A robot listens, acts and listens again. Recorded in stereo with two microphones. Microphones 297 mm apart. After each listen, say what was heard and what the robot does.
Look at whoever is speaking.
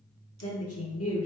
The woman speaking: about 55° left or 125° left. Turn 55° left.
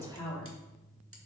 So it is at 10° left. Turn 10° left.
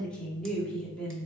Found it: a woman speaking, straight ahead.